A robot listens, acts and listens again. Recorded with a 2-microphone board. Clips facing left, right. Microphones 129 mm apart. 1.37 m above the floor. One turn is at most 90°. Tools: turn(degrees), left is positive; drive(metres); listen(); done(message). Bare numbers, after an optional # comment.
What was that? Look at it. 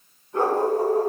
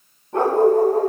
# The dog barking: about 70° right or 110° right.
turn(-70)
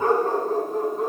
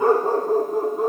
done("Found it: a dog barking, straight ahead, 2 to 4 m away.")